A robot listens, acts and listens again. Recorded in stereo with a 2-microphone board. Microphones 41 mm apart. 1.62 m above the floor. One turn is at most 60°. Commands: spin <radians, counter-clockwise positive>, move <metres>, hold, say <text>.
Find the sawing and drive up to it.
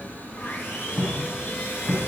spin 1.05
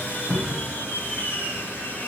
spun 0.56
spin 1.05
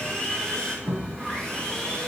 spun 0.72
spin 0.35
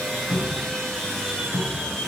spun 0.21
spin 0.17
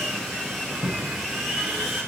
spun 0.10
move 1.0
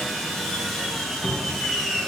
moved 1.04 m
move 1.0
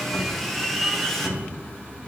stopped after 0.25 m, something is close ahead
say I am next to the sawing.